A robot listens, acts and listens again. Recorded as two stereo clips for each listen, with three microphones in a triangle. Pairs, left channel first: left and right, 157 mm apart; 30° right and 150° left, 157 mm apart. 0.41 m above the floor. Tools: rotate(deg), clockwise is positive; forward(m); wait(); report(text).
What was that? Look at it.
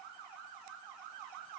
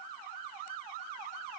wait()
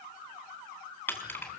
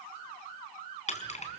rotate(-15)
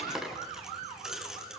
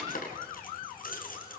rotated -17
report("Found it: keys jangling, straight ahead.")